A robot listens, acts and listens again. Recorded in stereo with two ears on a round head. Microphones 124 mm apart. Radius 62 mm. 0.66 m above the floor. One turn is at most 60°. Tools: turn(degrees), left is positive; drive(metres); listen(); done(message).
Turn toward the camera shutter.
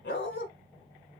listen()
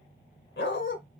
listen()
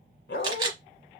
turn(degrees=-30)
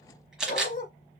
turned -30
done("Found it: a camera shutter, straight ahead, 1 to 2 m away.")